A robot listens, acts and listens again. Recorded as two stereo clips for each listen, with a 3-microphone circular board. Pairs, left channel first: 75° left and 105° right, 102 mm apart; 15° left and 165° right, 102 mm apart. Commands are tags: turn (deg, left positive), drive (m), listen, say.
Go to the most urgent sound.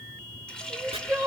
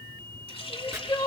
<turn deg="-40"/>
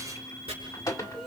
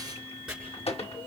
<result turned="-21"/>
<turn deg="-15"/>
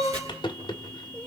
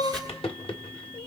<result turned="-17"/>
<drive m="1.0"/>
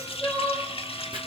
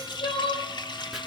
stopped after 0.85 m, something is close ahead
<say>Blocked. The crying is further on, straight ahead.</say>